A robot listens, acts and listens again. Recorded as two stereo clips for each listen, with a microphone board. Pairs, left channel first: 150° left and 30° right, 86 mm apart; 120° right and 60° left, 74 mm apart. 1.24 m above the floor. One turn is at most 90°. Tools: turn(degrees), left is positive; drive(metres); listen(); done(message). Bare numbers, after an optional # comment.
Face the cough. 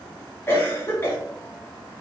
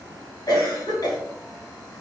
# The cough: 150° right.
turn(-90)
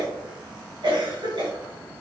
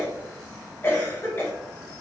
# The cough is now 60° right.
turn(-60)
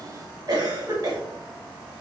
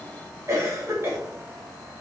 # The cough is now 10° left.
turn(10)
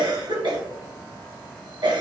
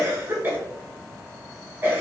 done("Found it: a cough, straight ahead.")